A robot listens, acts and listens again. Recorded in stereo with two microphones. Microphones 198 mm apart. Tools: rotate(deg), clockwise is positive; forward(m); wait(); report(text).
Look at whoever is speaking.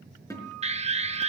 wait()
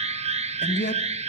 rotate(-65)
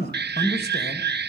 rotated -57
rotate(-60)
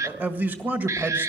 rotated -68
rotate(10)
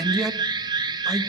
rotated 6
report("Facing the man speaking.")